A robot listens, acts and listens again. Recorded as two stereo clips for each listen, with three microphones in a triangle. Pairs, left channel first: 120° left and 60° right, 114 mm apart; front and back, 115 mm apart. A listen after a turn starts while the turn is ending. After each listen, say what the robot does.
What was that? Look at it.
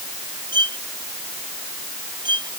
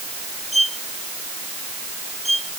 Turn 10° right.
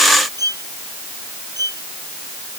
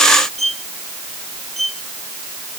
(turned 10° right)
Facing the violin.